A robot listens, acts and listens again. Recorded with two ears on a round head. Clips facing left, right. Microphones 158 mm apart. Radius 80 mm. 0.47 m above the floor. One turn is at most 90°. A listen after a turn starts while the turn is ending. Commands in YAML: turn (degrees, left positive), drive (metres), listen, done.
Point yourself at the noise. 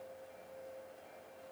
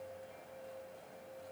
listen: true
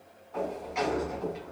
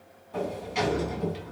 turn: -35
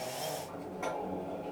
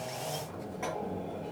done: "Facing the sliding door."